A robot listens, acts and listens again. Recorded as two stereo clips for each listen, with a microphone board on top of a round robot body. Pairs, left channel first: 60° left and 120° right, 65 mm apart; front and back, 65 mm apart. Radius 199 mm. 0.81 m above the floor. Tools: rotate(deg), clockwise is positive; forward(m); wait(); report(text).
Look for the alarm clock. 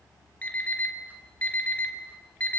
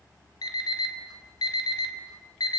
rotate(10)
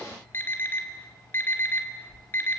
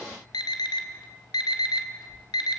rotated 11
report("Found it: an alarm clock, straight ahead, 2 to 4 m away.")